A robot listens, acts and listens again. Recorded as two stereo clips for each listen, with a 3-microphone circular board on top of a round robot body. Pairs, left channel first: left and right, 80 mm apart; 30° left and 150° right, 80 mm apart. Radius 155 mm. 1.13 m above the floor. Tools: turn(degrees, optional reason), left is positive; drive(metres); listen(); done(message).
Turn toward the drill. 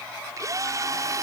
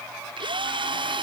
turn(degrees=-140, reason="The drill: 140° right.")
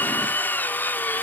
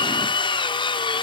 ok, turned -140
turn(degrees=20, reason="The drill is now 20° left.")
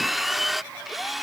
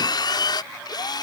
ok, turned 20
done("Found it: a drill, straight ahead.")